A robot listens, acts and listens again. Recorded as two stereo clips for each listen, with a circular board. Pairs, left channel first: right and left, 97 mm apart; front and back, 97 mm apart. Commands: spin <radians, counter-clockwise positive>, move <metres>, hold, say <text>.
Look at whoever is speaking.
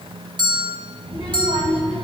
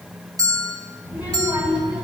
spin -1.92
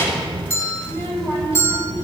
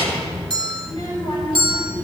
spin -0.52
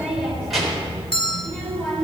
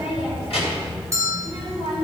say Facing the child speaking, 2 to 4 m away.